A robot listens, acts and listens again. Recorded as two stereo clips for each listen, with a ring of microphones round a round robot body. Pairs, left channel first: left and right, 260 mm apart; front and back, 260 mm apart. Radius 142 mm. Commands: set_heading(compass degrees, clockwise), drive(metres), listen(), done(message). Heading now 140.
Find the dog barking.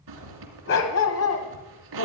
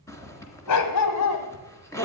set_heading(95)
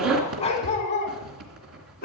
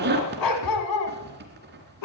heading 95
set_heading(65)
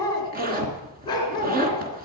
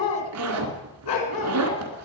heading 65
set_heading(50)
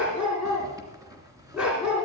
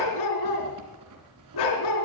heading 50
done("Found it: a dog barking, straight ahead.")